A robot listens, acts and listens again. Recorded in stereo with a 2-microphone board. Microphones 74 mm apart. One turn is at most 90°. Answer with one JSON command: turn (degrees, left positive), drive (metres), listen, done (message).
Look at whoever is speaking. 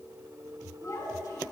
{"turn": 50}
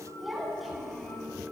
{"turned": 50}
{"done": "Found it: a child speaking, straight ahead, over 4 m away."}